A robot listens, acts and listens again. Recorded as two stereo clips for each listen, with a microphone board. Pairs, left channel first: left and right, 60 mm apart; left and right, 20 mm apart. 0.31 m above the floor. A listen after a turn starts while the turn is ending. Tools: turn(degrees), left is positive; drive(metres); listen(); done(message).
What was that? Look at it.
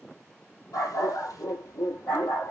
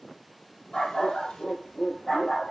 turn(degrees=90)
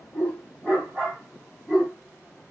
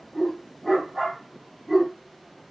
turn(degrees=-25)
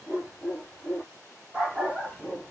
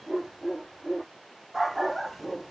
turn(degrees=-20)
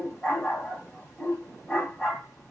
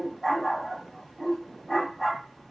done("Facing the dog barking.")